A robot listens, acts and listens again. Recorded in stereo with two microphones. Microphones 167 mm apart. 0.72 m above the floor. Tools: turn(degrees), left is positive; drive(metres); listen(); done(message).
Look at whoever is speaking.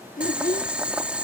turn(degrees=50)
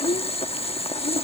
turn(degrees=75)
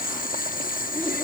listen()
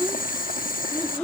turn(degrees=10)
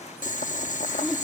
done("Facing the child speaking.")